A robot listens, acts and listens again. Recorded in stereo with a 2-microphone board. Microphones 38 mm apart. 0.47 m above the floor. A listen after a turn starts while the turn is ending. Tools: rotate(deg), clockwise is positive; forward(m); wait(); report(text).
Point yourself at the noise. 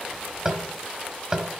rotate(20)
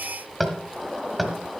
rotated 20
report("Found it: tapping, straight ahead.")